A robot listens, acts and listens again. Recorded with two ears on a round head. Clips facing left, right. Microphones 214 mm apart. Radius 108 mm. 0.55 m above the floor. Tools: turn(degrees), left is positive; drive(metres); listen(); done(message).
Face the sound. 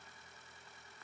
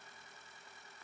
listen()
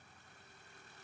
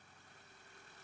listen()
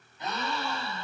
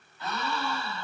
turn(degrees=20)
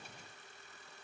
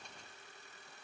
listen()
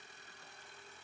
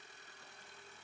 done("I heard a gasp, but can't make it out now. It was about straight ahead or 140° left.")